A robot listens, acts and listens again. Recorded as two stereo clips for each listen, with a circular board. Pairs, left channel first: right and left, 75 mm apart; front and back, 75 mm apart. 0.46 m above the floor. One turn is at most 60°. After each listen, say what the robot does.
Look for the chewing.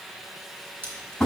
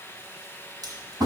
Turn 60° left.
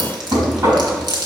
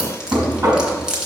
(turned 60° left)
Turn 60° left.
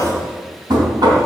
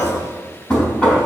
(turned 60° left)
Turn 45° left.
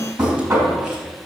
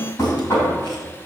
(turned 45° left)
Keep listening.
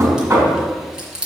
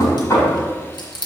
Turn 10° left.
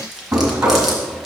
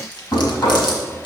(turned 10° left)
Found it: chewing, straight ahead.